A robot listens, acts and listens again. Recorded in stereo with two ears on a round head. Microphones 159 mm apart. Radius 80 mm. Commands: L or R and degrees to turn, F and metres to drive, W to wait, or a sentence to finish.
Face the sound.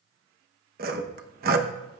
R55
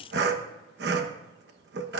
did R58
R65
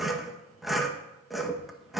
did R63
Facing the sawing, 1 to 2 m away.